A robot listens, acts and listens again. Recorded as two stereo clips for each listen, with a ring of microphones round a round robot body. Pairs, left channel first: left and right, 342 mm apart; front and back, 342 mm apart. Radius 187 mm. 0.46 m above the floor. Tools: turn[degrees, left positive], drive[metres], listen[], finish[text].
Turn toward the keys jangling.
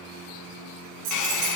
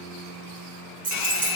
Thought: The keys jangling: 110° right.
Action: turn[-110]
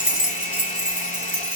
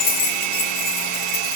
Action: finish[Found it: keys jangling, straight ahead, over 4 m away.]